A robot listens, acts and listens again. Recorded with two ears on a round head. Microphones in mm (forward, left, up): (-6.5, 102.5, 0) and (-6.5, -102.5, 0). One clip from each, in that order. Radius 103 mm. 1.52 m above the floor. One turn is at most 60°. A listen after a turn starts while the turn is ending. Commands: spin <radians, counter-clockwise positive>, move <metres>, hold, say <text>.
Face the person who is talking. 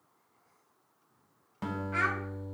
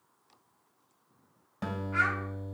spin 0.35
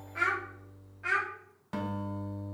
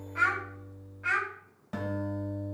say Found it: a child speaking, straight ahead.